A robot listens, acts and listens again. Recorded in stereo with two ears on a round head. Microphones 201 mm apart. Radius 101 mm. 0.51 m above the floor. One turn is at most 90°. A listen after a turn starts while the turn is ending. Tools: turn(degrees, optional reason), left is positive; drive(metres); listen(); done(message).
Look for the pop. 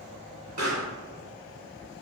turn(degrees=-35, reason="The pop: about 35° right or 145° right.")
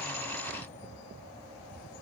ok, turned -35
listen()
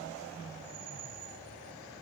done("I heard a pop, but can't make it out now. It was about straight ahead or 110° right.")